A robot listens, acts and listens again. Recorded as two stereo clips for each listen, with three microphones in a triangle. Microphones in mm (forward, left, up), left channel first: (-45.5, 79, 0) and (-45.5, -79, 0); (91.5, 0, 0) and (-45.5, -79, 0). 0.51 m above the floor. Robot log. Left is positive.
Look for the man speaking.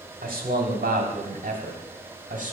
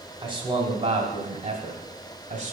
note: The man speaking: 120° right.
cmd yaw -120
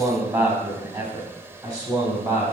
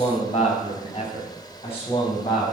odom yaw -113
note: The man speaking is now 25° right.
cmd yaw -25
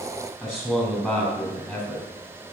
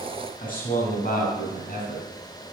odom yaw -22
end: Found it: a man speaking, straight ahead.